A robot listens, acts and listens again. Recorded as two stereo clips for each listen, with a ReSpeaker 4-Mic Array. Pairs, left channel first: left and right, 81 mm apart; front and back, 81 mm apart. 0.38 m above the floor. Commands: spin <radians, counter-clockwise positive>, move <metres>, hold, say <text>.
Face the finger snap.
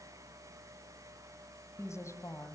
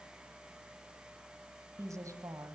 hold
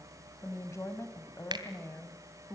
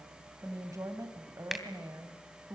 spin -1.66
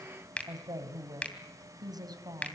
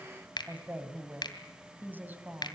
spin 0.26
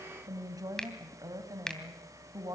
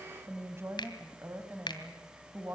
say Facing the finger snap.